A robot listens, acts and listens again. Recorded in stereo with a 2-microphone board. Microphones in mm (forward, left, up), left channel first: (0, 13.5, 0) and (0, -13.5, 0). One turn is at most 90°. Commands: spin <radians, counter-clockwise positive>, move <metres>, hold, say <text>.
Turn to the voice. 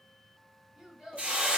spin -0.79
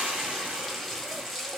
hold
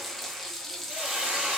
hold
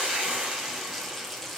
say I heard a child speaking, but can't make it out now. It was about straight ahead or 90° right.